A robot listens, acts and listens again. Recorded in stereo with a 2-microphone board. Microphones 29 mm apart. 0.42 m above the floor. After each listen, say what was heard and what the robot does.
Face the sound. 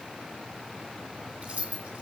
The keys jangling: about 45° right or 135° right. Turn 45° right.
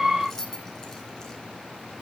So it is at 15° left. Turn 15° left.
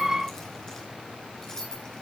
The keys jangling is now 15° left. Turn 15° left.
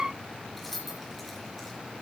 Facing the keys jangling.